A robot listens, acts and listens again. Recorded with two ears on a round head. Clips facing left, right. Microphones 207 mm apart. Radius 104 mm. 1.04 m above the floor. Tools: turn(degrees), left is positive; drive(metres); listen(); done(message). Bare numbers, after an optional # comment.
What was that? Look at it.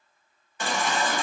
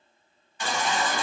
# The baby crying: about 45° left or 135° left.
turn(45)
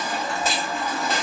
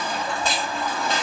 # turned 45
done("Found it: a baby crying, straight ahead, under 1 m away.")